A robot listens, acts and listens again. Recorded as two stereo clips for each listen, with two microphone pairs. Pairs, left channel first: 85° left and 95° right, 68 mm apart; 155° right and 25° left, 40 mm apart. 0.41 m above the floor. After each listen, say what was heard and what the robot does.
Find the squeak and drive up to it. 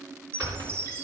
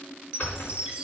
The squeak: 125° right. Turn 125° right.
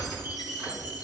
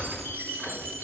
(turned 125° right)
The squeak is now 25° right. Turn 25° right.
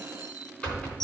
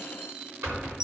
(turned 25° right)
The squeak is now 10° left. Turn 10° left.
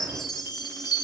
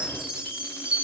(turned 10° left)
Keep listening.
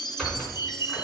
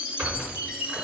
Drive 1.0 m forward.
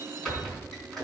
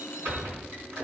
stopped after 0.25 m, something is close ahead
Blocked. The squeak is further on, straight ahead.